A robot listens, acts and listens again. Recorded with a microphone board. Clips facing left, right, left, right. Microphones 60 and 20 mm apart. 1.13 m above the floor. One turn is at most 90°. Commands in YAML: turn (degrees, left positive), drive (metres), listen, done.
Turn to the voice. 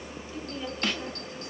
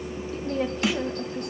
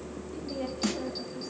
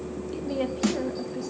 turn: -70
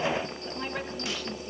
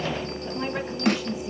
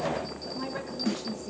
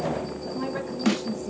turn: -10
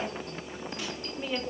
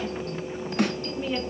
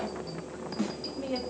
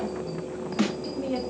done: "Facing the woman speaking, 1 to 2 m away."